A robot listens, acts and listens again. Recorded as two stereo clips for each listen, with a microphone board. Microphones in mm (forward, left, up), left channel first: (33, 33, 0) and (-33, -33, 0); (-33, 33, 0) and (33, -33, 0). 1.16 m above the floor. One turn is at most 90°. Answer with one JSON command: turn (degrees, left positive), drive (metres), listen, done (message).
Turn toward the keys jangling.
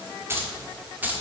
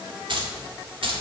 {"turn": -60}
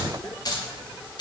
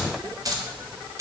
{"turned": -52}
{"turn": 10}
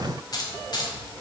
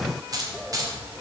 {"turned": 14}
{"done": "Found it: keys jangling, straight ahead, 2 to 4 m away."}